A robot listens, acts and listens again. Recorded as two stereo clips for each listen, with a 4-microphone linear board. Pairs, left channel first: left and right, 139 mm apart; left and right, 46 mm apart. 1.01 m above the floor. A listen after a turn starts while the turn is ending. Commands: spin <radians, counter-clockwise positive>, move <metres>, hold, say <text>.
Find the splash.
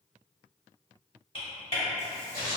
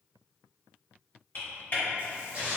spin -0.44
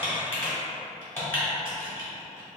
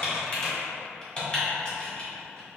hold
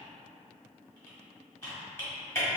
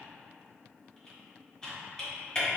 say I heard a splash, but can't make it out now. It was about straight ahead or 130° right.